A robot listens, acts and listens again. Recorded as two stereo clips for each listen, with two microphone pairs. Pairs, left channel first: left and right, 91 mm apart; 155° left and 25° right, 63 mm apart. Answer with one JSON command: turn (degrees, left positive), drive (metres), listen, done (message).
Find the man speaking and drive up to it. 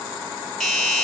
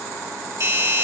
{"listen": true}
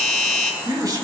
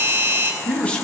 {"turn": -135}
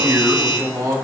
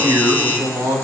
{"turn": -40}
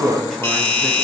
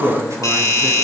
{"drive": 1.0}
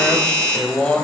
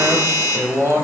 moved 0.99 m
{"turn": 10}
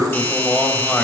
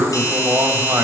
{"drive": 1.0}
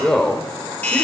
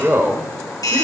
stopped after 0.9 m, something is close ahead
{"done": "I am next to the man speaking."}